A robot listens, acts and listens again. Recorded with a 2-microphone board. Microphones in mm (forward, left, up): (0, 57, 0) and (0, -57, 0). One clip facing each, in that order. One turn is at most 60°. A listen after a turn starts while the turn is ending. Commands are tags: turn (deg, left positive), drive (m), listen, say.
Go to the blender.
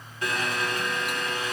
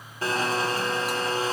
<turn deg="-35"/>
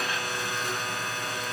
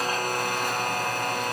<turn deg="-60"/>
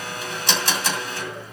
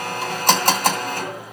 <turn deg="-60"/>
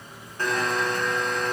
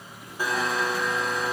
<drive m="1.0"/>
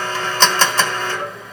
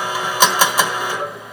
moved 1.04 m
<turn deg="-15"/>
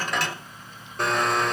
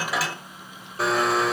<drive m="1.0"/>
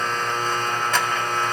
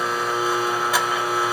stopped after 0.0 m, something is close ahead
<turn deg="-10"/>
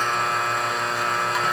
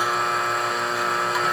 <say>Arrived at the blender, straight ahead.</say>